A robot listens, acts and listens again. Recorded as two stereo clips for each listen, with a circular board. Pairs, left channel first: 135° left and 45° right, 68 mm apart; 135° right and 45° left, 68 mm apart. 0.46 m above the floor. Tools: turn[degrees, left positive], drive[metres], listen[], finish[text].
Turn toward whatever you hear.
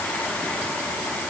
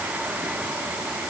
Action: listen[]
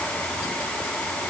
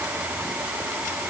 Action: listen[]
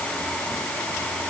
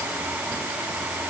Action: finish[I can't make out anything to turn to.]